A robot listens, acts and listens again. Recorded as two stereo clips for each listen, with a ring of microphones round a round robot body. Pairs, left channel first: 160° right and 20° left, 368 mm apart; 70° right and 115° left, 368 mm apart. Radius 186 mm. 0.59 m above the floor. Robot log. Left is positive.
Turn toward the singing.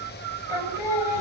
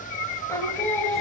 note: The singing: 155° right.
cmd yaw -155
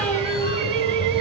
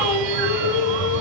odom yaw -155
note: The singing is now 75° right.
cmd yaw -75
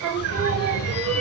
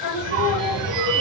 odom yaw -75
note: The singing is now 30° right.
cmd yaw -30
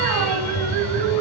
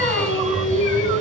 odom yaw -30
note: The singing is now 10° right.
cmd yaw -10
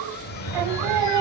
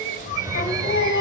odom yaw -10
end: Facing the singing, 2 to 4 m away.